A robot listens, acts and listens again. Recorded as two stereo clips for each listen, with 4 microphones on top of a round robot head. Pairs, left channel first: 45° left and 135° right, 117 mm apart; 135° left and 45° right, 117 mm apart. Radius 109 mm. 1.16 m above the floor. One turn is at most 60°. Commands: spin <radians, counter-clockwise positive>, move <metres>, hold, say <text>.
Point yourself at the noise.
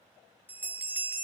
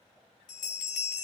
spin 1.05
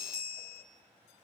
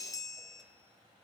spin 1.05
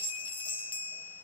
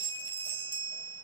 say Found it: a bell, straight ahead.